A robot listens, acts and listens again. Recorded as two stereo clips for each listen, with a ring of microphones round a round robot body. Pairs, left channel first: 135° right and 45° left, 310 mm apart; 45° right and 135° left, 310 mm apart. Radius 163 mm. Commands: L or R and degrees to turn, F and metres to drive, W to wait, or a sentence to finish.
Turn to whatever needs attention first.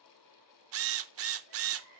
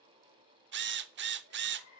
R60
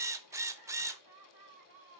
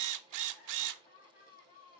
R20
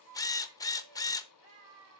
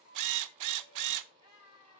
Facing the crying, over 4 m away.